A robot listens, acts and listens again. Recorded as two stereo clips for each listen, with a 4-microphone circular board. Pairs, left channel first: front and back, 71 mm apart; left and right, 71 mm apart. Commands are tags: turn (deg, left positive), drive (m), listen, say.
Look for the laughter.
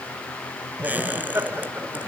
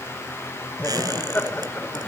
<turn deg="150"/>
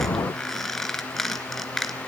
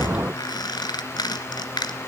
<listen/>
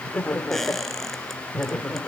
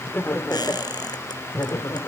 <turn deg="85"/>
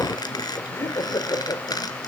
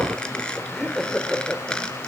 <turn deg="10"/>
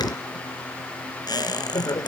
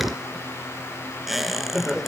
<say>Facing the laughter.</say>